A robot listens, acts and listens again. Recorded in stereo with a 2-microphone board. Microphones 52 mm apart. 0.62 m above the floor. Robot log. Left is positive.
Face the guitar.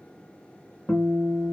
note: The guitar: about 35° left or 145° left.
cmd yaw +35
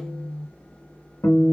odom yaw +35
note: So it is at 110° left.
cmd yaw +110
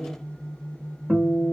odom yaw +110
note: The guitar is now 30° right.
cmd yaw -30
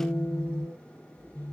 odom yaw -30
end: Facing the guitar.